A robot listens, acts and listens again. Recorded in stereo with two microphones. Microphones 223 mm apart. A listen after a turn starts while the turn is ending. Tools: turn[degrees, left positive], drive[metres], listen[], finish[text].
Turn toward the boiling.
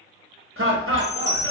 Action: listen[]
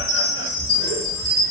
Action: listen[]
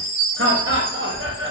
Action: finish[I can't make out boiling to turn to.]